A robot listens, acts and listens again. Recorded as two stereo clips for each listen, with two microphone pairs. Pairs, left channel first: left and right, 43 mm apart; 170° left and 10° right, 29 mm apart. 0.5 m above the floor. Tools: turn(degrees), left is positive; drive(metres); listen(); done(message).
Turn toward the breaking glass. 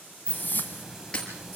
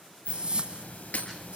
turn(degrees=155)
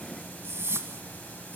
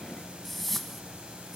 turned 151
done("Facing where the breaking glass came from. I can't hear it now.")